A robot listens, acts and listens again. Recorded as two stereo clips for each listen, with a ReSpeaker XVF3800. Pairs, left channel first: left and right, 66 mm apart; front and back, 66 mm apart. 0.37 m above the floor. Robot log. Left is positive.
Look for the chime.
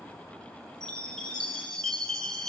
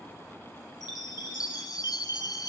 note: The chime: 10° left.
cmd yaw +10
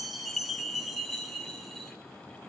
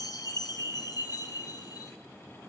end: Found it: a chime, straight ahead, 1 to 2 m away.